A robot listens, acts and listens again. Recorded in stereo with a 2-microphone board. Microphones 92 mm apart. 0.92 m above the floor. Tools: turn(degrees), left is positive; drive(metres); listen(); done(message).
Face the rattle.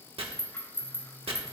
turn(degrees=25)
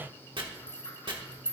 turn(degrees=125)
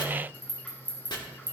turn(degrees=15)
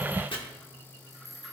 done("Found it: a rattle, straight ahead.")